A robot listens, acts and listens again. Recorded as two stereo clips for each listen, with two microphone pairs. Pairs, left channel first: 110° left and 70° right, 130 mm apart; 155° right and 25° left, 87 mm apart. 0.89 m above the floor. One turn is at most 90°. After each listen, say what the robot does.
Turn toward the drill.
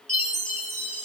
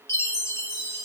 Keep listening.
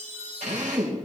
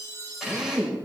Turn 60° right.
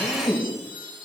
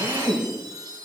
Turn 20° left.
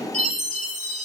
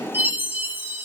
Facing the drill, 2 to 4 m away.